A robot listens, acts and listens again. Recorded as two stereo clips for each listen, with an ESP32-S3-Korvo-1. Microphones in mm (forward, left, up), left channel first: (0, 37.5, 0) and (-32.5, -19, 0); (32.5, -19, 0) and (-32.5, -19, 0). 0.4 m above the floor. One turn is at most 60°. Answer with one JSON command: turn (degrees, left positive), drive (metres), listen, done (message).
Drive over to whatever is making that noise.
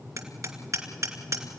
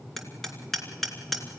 {"turn": -60}
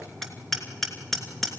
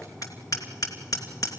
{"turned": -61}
{"turn": -25}
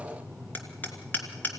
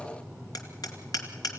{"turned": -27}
{"drive": 1.0}
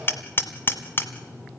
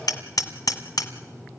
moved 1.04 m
{"turn": 10}
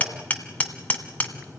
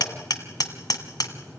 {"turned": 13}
{"drive": 1.0}
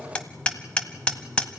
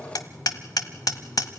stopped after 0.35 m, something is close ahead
{"turn": -10}
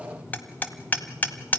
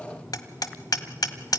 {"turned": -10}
{"done": "Arrived at the hammering, straight ahead."}